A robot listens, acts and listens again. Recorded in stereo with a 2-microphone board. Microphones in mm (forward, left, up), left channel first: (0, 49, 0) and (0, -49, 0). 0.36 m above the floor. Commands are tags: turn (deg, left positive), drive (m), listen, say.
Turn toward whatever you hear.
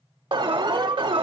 <turn deg="-60"/>
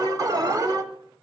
<turn deg="-45"/>
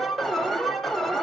<say>Found it: an alarm, straight ahead.</say>